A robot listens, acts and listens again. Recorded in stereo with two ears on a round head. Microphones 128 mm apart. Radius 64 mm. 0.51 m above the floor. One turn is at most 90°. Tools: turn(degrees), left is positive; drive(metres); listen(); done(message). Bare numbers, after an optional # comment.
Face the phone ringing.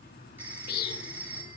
turn(-30)
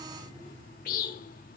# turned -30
listen()
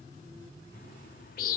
listen()
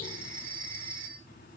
# So it is at 135° right.
turn(-90)
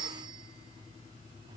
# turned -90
# The phone ringing is now 35° right.
turn(-35)
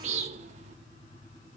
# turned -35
listen()
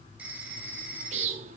# The phone ringing is now 10° right.
turn(-10)
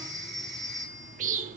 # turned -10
done("Found it: a phone ringing, straight ahead.")